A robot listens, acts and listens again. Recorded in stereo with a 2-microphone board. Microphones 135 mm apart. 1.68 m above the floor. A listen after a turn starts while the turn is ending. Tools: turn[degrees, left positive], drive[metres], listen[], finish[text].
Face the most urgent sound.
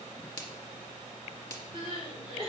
Thought: The crying: about 45° right or 135° right.
Action: turn[-45]
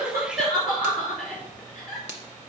Action: finish[Facing the crying.]